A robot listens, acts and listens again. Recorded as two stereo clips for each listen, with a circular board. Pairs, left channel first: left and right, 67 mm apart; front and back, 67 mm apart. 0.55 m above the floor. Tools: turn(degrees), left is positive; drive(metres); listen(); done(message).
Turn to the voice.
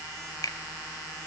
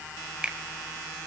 listen()
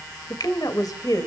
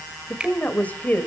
turn(degrees=65)
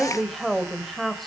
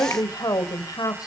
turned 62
done("Facing the woman speaking.")